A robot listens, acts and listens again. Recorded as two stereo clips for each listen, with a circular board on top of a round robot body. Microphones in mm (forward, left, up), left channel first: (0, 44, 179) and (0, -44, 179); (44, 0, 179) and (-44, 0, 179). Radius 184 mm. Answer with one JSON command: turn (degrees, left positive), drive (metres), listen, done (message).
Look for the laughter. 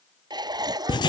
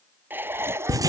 {"turn": -120}
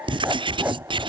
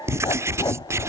{"listen": true}
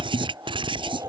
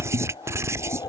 {"turn": -35}
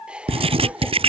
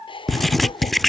{"turn": -10}
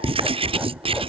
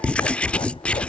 {"listen": true}
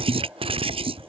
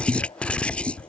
{"listen": true}
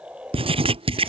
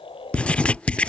{"turn": -15}
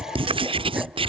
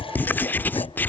{"listen": true}
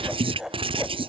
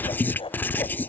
{"done": "Found it: laughter, straight ahead."}